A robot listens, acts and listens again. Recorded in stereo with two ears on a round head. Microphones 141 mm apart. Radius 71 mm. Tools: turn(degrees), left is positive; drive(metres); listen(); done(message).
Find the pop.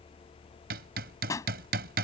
turn(degrees=20)
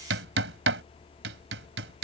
listen()
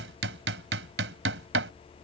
done("I heard a pop, but can't make it out now. It was about straight ahead or 140° left.")